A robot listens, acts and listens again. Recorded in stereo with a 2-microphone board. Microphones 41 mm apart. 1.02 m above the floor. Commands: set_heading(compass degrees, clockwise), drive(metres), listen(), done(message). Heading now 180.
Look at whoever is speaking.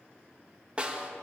listen()
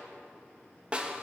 listen()
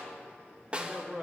set_heading(205)
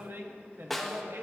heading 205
set_heading(330)
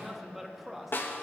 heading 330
done("Found it: a man speaking, straight ahead.")